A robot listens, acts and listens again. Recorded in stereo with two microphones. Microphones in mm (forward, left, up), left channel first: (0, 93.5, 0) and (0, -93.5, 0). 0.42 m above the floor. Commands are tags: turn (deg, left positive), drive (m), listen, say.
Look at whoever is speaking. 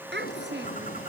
<turn deg="-70"/>
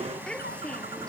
<say>Found it: a child speaking, straight ahead.</say>